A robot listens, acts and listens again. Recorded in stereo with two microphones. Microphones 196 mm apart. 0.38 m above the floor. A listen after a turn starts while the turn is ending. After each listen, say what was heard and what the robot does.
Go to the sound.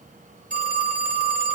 The phone ringing: about 45° right or 135° right. Turn 45° right.
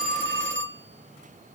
So it is at 90° right. Turn 90° right.
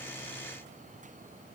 Keep listening.
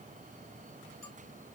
Keep listening.
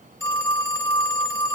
The phone ringing is now 15° left. Turn 15° left.
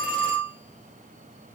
Drive 1.0 m forward.
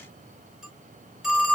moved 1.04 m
Drive 1.0 m forward.
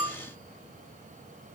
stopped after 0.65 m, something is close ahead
I am next to the phone ringing.